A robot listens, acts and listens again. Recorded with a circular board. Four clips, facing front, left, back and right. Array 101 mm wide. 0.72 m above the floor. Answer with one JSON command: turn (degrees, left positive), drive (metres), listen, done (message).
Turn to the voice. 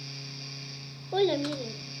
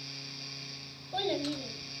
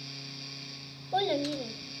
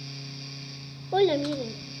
{"turn": -65}
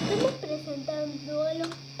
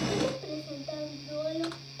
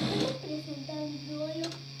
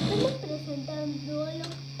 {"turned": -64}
{"done": "Found it: a child speaking, straight ahead."}